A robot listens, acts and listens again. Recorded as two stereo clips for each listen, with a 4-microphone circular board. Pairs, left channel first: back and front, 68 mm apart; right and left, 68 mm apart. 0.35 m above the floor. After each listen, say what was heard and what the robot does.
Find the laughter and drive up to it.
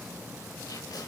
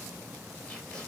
Keep listening.
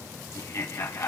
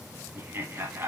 The laughter: 145° left. Turn 145° left.
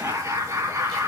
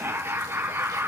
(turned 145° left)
The laughter is now 45° left. Turn 45° left.
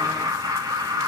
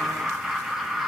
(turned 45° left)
Drive 1.0 m forward.
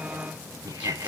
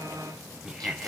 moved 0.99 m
The laughter is now 10° left. Turn 10° left.
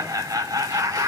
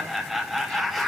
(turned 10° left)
Drive 1.0 m forward.
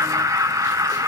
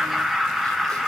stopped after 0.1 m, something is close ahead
Arrived at the laughter, straight ahead.